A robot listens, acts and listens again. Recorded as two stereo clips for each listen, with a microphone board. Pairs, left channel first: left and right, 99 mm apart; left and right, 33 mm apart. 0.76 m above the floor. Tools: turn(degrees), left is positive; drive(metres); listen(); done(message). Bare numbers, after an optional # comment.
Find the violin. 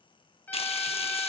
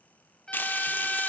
# The violin: about 20° left or 160° left.
turn(20)
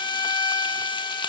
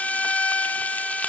# So it is at 140° left.
turn(140)
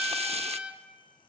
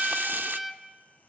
# The violin is now 15° right.
turn(-15)
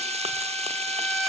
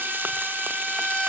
done("Found it: a violin, straight ahead, 2 to 4 m away.")